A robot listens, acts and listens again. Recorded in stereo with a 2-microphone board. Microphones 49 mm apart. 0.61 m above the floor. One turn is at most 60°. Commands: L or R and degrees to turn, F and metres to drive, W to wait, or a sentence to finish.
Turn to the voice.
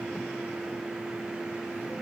W
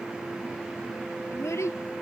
L60
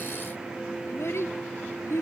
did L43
L60
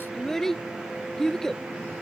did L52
Facing the child speaking.